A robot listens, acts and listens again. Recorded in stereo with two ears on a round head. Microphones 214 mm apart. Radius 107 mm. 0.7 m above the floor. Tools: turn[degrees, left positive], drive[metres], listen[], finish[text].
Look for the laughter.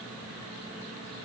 Action: listen[]
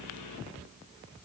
Action: listen[]
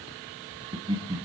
Thought: The laughter: about 20° right or 160° right.
Action: turn[-20]
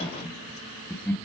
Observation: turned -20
Thought: So it is at 10° left.
Action: turn[10]
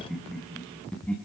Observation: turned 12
Action: finish[Found it: laughter, straight ahead.]